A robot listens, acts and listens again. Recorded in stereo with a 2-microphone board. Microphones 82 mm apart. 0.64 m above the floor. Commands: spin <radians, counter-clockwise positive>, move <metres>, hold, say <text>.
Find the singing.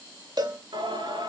spin -1.22
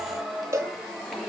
say Found it: singing, straight ahead, over 4 m away.